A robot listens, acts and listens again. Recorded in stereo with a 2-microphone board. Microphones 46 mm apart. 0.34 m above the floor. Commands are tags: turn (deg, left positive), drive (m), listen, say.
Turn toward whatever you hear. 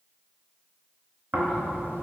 <turn deg="-60"/>
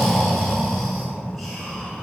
<say>Facing the snoring, under 1 m away.</say>